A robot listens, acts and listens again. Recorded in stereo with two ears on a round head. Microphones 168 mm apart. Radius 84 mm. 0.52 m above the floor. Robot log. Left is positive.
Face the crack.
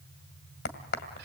note: The crack: about 60° left or 120° left.
cmd yaw +60
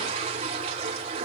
cmd idle
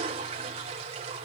end: I heard a crack, but can't make it out now. It was about straight ahead or 60° left.